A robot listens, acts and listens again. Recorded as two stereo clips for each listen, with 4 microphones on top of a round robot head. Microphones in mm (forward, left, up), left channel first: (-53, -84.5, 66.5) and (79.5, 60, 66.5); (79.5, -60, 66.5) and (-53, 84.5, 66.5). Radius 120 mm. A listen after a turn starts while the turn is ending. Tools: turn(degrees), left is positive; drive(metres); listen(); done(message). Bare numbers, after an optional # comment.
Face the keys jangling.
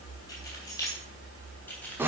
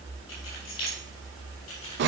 # The keys jangling: 50° right.
turn(-50)
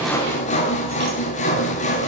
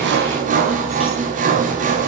listen()
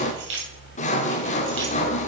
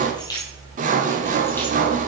# The keys jangling is now 25° left.
turn(25)
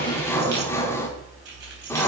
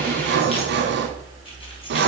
# The keys jangling is now 15° left.
turn(15)
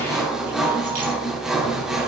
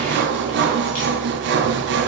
listen()
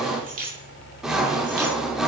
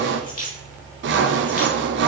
done("Found it: keys jangling, straight ahead, 2 to 4 m away.")